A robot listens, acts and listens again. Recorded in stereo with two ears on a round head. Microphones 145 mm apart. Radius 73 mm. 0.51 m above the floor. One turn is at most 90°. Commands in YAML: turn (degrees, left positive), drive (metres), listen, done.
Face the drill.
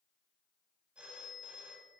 listen: true
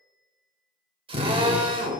turn: -35
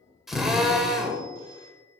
done: "Found it: a drill, straight ahead."